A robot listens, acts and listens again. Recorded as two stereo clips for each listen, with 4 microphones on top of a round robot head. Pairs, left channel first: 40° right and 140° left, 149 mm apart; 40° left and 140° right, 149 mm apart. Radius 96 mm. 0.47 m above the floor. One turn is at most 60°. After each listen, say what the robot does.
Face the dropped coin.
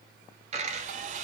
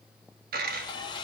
Turn 60° right.
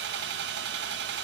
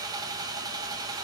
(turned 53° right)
Turn 60° right.
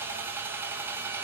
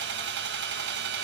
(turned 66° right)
Turn 50° right.
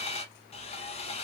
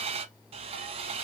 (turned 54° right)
Facing where the dropped coin came from. I can't hear it now.